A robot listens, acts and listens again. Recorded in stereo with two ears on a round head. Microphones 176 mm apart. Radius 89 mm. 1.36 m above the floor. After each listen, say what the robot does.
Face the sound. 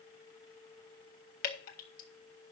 Turn 45° left.
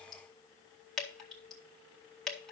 Facing the dripping.